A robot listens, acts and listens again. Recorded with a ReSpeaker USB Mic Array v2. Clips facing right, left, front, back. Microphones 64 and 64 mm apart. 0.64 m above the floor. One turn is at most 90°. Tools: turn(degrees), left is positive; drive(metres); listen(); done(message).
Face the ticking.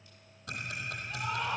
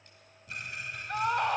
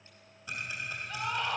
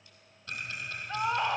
turn(degrees=-80)
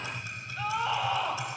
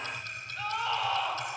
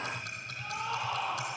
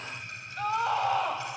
turn(degrees=-10)
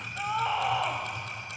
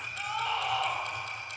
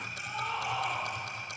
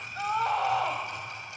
done("Facing the ticking, 2 to 4 m away.")